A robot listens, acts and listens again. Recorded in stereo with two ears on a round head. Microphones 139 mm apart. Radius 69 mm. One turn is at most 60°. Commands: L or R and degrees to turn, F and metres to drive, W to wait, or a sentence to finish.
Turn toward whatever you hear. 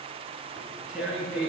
R30
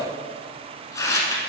L20
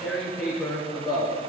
Facing the tearing paper.